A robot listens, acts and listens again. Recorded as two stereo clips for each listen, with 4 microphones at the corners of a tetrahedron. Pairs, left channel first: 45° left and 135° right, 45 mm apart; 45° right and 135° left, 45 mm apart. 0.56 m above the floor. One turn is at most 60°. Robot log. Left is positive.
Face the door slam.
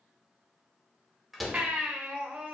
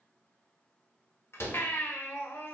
note: The door slam: 45° right.
cmd yaw -45
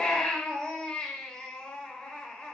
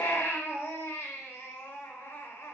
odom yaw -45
end: I heard a door slam from this way, but can't make it out now.